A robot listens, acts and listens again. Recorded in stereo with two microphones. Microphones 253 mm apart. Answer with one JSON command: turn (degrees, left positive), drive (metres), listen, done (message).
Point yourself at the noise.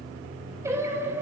{"turn": -30}
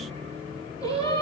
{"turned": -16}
{"turn": 30}
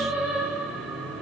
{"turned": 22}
{"done": "Facing the singing."}